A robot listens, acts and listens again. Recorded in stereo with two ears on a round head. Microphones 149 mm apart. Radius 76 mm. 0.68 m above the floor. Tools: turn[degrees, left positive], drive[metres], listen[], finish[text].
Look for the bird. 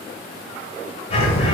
Thought: The bird: about 35° left or 145° left.
Action: turn[35]
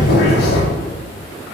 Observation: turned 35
Thought: So it is at 110° left.
Action: turn[110]
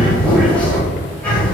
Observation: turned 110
Thought: The bird is now 10° left.
Action: turn[10]
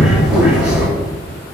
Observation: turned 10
Action: finish[Facing the bird, 1 to 2 m away.]